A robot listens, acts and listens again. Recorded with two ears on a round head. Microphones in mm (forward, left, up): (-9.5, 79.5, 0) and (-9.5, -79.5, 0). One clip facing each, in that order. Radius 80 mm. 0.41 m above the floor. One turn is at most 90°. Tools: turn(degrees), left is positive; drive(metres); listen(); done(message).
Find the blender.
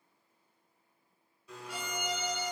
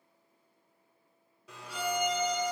turn(degrees=-60)
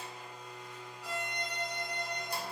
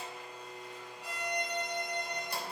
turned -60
turn(degrees=-55)
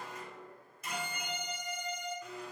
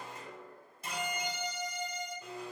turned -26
turn(degrees=-30)
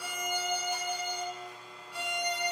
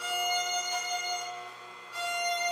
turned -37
turn(degrees=10)
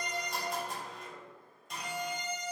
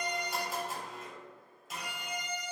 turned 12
done("Facing the blender.")